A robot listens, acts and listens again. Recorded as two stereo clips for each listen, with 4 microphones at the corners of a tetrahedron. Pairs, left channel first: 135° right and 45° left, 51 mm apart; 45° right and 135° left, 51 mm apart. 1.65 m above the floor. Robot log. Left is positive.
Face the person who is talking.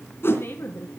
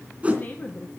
note: The woman speaking: 100° right.
cmd yaw -100
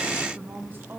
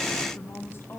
end: Facing the woman speaking.